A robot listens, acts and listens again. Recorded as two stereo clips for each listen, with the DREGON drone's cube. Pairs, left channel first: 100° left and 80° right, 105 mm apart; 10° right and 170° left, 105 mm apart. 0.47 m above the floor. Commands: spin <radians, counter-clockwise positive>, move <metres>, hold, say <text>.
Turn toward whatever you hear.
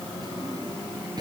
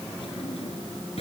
spin -0.52
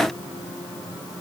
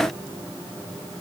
hold
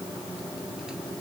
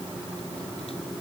hold
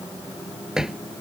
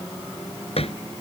say Facing the drawer.